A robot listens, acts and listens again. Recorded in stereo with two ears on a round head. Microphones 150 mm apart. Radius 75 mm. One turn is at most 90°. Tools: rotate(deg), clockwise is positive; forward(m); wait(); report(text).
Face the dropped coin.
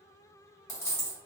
rotate(-20)
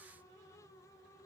wait()
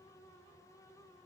report("I heard a dropped coin, but can't make it out now. It was about straight ahead or 140° left.")